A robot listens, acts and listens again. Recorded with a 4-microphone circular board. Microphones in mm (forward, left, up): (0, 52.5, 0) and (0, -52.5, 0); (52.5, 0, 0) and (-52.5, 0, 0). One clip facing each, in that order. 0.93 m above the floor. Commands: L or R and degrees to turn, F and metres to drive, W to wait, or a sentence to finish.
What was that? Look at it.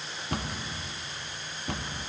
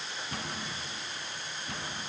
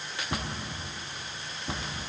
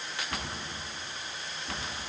L70
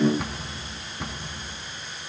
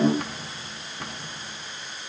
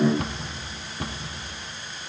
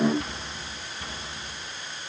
Facing the cupboard door, 1 to 2 m away.